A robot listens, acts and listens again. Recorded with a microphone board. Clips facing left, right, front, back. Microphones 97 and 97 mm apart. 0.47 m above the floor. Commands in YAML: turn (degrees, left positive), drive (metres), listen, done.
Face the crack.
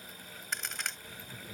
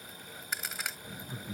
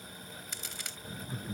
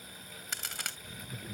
turn: -175
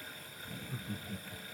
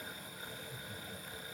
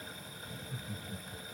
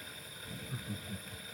done: "Facing where the crack came from. I can't hear it now."